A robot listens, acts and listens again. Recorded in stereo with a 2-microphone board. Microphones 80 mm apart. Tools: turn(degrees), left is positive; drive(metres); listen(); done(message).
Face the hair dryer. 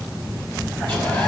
listen()
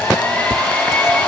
turn(degrees=25)
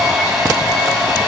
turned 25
done("Found it: a hair dryer, straight ahead, over 4 m away.")